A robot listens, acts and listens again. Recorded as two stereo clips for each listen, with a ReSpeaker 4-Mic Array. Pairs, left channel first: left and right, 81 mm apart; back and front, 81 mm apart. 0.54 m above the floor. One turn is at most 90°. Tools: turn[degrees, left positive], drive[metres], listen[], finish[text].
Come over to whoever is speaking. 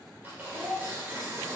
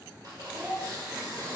Thought: The child speaking: 20° left.
Action: turn[20]
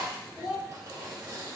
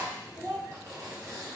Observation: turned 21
Action: drive[1.0]
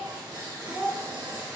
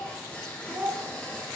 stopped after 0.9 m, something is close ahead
Thought: The child speaking is now 10° right.
Action: turn[-10]
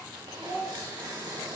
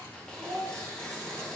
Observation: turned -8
Action: finish[Arrived at the child speaking, straight ahead.]